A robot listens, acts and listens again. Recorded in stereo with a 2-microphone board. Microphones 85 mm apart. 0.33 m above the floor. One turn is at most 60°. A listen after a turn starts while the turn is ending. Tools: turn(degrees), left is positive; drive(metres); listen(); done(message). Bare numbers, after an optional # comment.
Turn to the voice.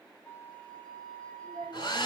# The child speaking: about 60° right or 120° right.
turn(-60)
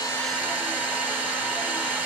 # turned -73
listen()
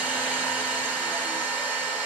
listen()
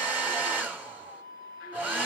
done("I heard a child speaking, but can't make it out now. It was about 15° left or 45° right.")